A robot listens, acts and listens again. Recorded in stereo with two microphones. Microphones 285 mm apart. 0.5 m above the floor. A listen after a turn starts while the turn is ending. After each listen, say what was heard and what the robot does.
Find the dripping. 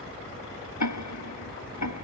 Keep listening.
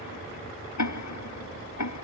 Keep listening.
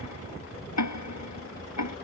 I can't make out dripping, only ticking.